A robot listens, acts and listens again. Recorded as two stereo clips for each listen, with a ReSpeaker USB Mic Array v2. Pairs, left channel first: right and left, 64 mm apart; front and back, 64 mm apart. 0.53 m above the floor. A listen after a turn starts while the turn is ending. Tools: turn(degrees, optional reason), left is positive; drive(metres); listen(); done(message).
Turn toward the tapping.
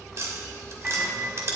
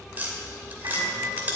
turn(degrees=120, reason="The tapping: 120° left.")
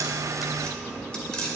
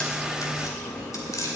turn(degrees=-15, reason="The tapping is now 15° right.")
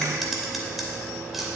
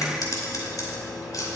done("Found it: tapping, straight ahead, 2 to 4 m away.")